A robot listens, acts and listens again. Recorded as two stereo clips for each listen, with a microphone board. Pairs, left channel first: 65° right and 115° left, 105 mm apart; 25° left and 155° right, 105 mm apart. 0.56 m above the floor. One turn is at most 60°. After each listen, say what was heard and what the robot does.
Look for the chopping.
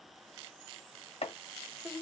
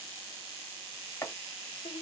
The chopping: 45° right. Turn 45° right.
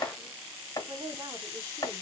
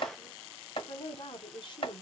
The chopping is now 10° right. Turn 10° right.
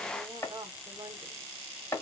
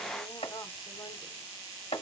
Found it: chopping, straight ahead.